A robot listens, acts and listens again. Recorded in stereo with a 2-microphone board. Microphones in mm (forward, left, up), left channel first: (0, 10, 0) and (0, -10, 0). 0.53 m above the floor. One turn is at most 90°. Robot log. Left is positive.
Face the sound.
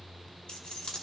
note: The keys jangling: about 50° left or 130° left.
cmd yaw +50
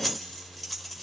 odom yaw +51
end: Found it: keys jangling, straight ahead, 1 to 2 m away.